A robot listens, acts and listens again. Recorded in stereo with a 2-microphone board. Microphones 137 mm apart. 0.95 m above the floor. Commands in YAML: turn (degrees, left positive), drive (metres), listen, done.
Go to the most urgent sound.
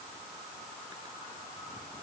listen: true
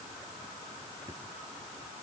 listen: true
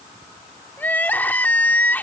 turn: 30
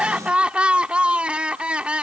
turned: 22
drive: 1.0
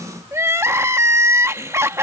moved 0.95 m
turn: -20
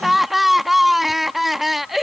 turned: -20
drive: 1.0
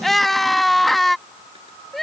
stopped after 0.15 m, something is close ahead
done: "Arrived at the crying, straight ahead."